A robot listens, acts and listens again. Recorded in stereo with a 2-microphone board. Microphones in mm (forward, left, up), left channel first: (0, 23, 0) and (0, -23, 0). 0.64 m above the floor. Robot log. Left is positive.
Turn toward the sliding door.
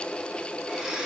cmd idle
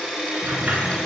note: The sliding door: about 45° right or 135° right.
cmd yaw -45
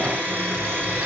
cmd idle
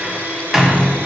note: So it is at 10° right.
cmd yaw -10
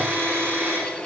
cmd idle
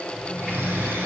end: Found it: a sliding door, straight ahead, 1 to 2 m away.